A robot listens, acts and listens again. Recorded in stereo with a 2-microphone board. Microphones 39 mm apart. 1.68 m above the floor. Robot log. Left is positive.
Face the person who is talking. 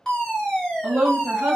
note: The woman speaking: about 50° right or 130° right.
cmd yaw -50
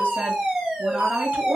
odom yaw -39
cmd idle
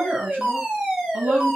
note: So it is at 80° right.
cmd yaw -80
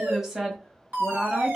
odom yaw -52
note: The woman speaking is now 25° right.
cmd yaw -25
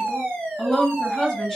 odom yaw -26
end: Facing the woman speaking.